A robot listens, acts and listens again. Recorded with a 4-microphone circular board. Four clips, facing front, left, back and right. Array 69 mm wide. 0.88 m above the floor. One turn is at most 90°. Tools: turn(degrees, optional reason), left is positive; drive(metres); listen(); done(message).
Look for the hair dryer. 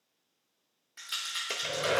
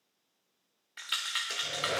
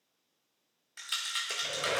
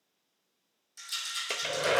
turn(degrees=-70, reason="The hair dryer: 70° right.")
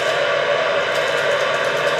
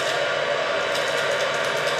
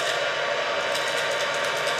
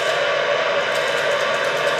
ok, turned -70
turn(degrees=-30, reason="The hair dryer is now 30° right.")
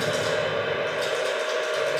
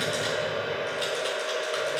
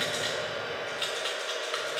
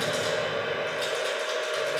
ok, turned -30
turn(degrees=-10, reason="The hair dryer is now 10° right.")
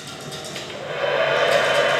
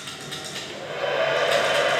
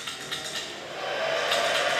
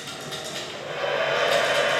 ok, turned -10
done("Found it: a hair dryer, straight ahead.")